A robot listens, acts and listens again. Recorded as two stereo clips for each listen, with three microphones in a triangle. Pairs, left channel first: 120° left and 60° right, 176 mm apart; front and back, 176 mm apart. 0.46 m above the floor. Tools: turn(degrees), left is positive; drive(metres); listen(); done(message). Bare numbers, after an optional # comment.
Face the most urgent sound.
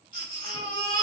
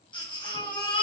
# The baby crying: 60° left.
turn(60)
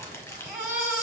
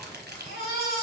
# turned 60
# The baby crying is now 15° left.
turn(15)
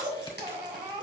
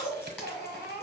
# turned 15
done("Facing the baby crying.")